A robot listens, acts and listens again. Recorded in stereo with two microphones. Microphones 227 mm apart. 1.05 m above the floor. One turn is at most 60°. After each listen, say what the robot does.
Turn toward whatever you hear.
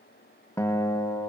Turn 30° left.
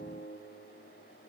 Turn 60° left.
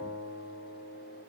Turn 60° left.
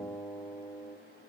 Turn 10° left.
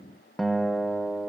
Facing the guitar, under 1 m away.